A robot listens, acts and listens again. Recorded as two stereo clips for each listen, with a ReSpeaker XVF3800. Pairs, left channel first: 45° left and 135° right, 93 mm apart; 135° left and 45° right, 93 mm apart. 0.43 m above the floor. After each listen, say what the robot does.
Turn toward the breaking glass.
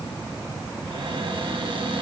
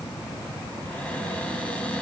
Keep listening.
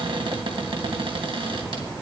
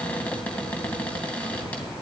Keep listening.
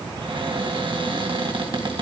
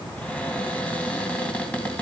I can't make out breaking glass to turn to.